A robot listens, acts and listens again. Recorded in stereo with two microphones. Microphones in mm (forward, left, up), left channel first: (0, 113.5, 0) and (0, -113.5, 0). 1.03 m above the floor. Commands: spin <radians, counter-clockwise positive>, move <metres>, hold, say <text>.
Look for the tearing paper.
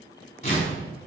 spin 0.52
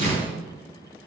spin 2.09
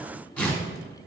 say Facing the tearing paper, 2 to 4 m away.